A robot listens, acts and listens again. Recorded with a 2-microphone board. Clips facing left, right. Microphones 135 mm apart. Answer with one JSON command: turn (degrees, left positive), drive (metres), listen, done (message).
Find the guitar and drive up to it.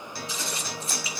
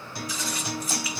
{"turn": -20}
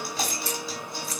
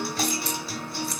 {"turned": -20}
{"drive": 1.0}
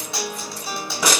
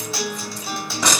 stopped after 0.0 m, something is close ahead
{"done": "Something is in my way. I am facing the guitar but have not reached it."}